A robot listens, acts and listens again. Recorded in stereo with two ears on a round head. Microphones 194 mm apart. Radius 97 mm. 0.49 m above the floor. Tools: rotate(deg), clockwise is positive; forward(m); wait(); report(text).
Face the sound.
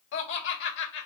rotate(-60)
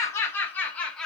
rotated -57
report("Facing the laughter, 1 to 2 m away.")